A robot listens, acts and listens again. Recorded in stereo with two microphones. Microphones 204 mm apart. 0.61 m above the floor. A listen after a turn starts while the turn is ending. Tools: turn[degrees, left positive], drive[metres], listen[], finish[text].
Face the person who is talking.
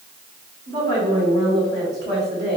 Thought: The woman speaking: about 55° right or 125° right.
Action: turn[-55]
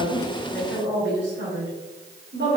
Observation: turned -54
Thought: So it is at 65° right.
Action: turn[-65]
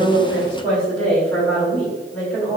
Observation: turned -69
Action: finish[Facing the woman speaking.]